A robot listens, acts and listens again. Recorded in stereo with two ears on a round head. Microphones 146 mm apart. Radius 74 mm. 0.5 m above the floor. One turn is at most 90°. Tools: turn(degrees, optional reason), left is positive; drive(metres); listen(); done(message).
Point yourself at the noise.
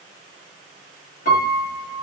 turn(degrees=55, reason="The piano: about 55° left or 125° left.")
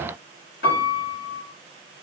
turn(degrees=70, reason="So it is at 70° left.")
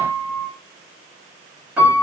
turn(degrees=-10, reason="The piano is now 10° right.")
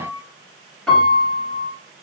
done("Found it: a piano, straight ahead, 1 to 2 m away.")